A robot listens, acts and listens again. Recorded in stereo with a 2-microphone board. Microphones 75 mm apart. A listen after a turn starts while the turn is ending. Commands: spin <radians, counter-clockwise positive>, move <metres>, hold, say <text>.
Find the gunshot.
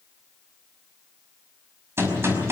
spin -0.52
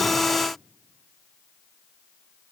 hold
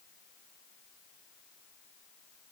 say I heard a gunshot, but can't make it out now. It was about straight ahead or 120° right.